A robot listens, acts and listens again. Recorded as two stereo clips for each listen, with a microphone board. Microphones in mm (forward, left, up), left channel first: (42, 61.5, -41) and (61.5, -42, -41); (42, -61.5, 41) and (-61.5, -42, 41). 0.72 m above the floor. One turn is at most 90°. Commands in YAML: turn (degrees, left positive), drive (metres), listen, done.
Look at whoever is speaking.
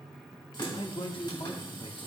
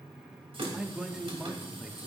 turn: 90
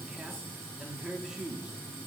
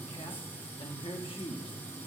done: "Found it: a man speaking, straight ahead, 1 to 2 m away."